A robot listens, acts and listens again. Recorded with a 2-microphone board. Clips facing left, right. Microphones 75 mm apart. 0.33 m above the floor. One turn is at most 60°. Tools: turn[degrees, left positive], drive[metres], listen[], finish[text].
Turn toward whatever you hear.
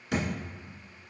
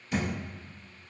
Thought: The thud: about 75° left or 105° left.
Action: turn[60]
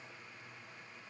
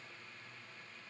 Action: listen[]
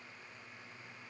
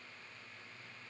Action: finish[I heard a thud, but can't make it out now. It was about 15° left or 45° left.]